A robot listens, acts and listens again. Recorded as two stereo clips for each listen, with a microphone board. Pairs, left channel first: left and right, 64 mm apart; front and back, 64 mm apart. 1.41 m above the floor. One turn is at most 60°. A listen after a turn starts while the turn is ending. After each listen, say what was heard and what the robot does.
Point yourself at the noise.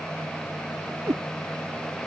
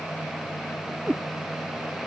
The cat meowing: 120° right. Turn 60° right.
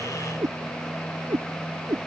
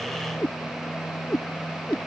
The cat meowing is now 80° right. Turn 60° right.
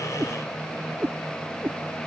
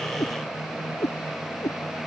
The cat meowing is now 30° right. Turn 30° right.
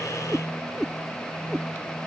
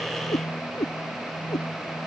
Facing the cat meowing.